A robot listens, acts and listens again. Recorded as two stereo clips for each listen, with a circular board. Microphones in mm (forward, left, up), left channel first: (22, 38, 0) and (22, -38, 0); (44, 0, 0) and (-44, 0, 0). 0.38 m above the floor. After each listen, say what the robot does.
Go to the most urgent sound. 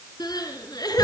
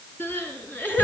Turn 65° left.
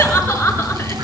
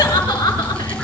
Turn 30° left.
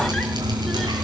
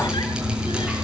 Keep listening.
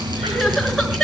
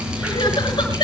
Drive 1.0 m forward.
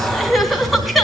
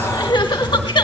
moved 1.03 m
Drive 1.0 m forward.
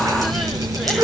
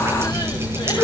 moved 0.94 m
Drive 1.0 m forward.
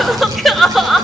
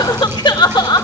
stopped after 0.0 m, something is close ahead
I am next to the crying.